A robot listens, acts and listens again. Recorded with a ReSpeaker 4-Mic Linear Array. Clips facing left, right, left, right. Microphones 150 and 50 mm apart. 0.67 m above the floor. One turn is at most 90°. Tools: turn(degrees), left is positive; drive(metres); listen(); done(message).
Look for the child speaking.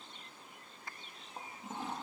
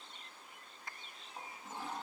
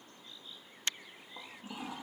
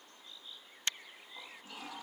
listen()
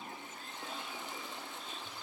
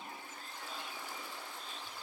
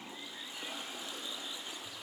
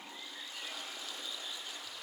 listen()
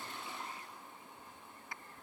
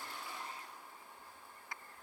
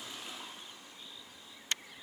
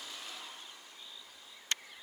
done("I can't make out a child speaking, only a toilet flushing.")